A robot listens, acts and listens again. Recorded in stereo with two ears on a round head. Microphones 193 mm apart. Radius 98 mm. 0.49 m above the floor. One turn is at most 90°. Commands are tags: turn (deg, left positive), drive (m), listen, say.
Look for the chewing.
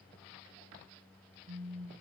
<listen/>
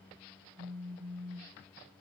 <listen/>
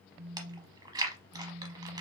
<turn deg="-20"/>
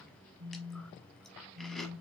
<say>Found it: chewing, straight ahead.</say>